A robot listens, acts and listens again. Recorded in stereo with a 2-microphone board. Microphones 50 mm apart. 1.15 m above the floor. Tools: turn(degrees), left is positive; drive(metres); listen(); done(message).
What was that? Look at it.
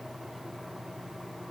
listen()
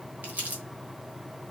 turn(degrees=-35)
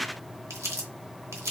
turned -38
turn(degrees=-110)
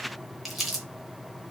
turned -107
done("Found it: crumpling, straight ahead, 1 to 2 m away.")